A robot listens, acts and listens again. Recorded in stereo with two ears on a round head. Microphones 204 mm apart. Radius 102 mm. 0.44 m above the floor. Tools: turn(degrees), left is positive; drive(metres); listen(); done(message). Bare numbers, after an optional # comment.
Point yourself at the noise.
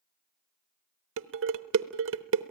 # The dishes clattering: about 60° right or 120° right.
turn(-60)
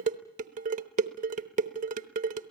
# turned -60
# So it is at 40° right.
turn(-40)
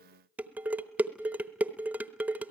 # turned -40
# The dishes clattering is now 10° right.
turn(-10)
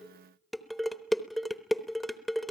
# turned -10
done("Facing the dishes clattering.")